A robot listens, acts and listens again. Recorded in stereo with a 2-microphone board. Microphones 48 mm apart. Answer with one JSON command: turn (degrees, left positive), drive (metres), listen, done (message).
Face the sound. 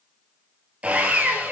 {"turn": -25}
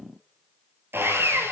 {"turn": -130}
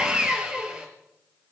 {"turn": -25}
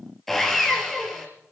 {"done": "Found it: sawing, straight ahead, over 4 m away."}